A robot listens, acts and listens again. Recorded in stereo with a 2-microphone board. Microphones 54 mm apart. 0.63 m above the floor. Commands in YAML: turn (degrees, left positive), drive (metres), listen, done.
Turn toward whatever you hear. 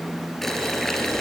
turn: 30
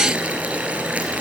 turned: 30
turn: -25
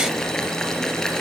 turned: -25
done: "Facing the boiling, 2 to 4 m away."